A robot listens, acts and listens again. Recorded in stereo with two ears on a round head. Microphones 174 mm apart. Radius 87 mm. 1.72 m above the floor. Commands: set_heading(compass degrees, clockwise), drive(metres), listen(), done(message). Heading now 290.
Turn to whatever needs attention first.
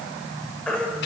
set_heading(260)
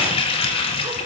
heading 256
listen()
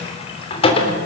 listen()
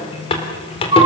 set_heading(286)
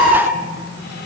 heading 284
done("Found it: a baby crying, straight ahead.")